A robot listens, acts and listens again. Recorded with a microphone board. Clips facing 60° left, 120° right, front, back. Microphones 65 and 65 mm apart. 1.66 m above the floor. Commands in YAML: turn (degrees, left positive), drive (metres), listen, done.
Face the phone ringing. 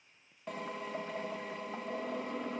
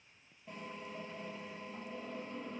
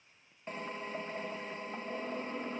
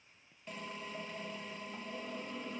listen: true
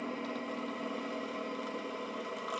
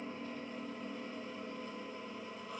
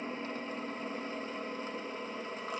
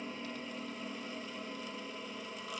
listen: true
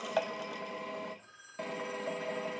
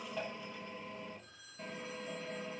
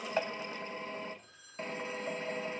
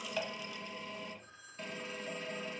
turn: 120
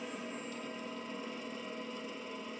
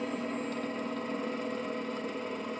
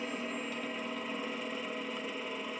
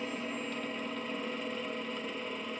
listen: true
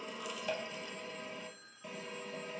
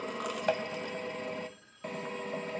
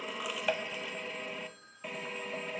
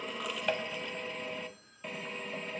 turn: -15
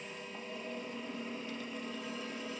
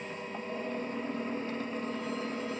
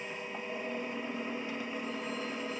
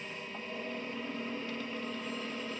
listen: true
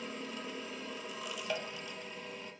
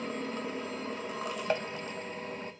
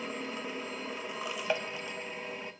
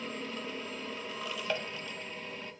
listen: true
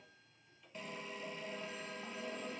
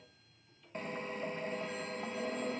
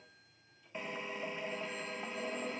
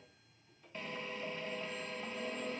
done: "I heard a phone ringing from this way, but can't make it out now."